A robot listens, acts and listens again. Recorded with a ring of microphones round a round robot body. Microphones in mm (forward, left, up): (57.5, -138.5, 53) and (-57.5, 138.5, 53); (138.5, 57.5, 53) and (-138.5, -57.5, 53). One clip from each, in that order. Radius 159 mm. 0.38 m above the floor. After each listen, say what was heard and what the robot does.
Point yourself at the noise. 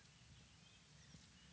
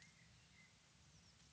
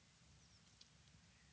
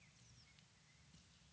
Keep listening.
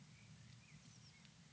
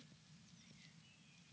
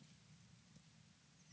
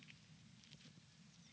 Keep listening.
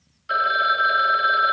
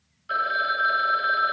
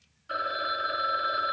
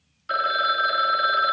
The phone ringing: 145° right. Turn 145° right.
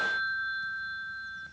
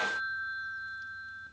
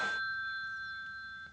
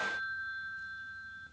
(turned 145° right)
The phone ringing is now 25° right. Turn 25° right.
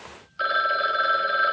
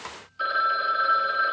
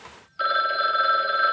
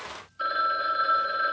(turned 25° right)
Facing the phone ringing, 1 to 2 m away.